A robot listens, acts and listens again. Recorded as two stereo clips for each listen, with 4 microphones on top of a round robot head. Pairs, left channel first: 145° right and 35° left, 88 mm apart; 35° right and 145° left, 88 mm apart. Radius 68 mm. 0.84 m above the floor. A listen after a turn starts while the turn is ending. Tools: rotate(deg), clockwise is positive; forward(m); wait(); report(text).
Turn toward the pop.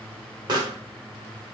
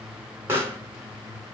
rotate(-80)
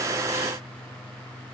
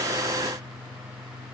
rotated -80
report("I heard a pop from this way, but can't make it out now.")